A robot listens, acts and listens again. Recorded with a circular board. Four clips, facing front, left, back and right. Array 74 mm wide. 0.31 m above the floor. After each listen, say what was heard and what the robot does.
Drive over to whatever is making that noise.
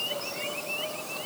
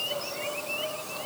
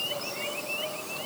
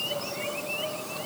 Keep listening.
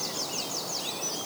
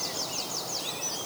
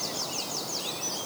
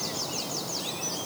Keep listening.
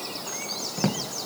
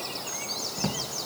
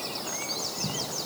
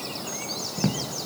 The drawer: 20° right. Turn 20° right.
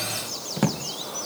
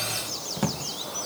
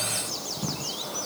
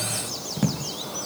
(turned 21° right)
Drive 1.0 m forward.
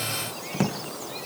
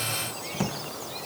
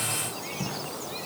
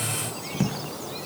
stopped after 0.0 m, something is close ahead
Blocked. The drawer is further on, straight ahead.